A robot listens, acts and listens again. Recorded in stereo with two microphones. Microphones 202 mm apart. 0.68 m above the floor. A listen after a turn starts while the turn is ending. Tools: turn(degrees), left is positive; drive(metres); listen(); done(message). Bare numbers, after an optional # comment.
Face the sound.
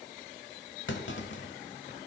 # The clunk: about 70° left or 110° left.
turn(70)
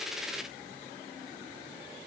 listen()
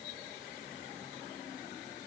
done("I heard a clunk, but can't make it out now. It was about straight ahead or 40° left.")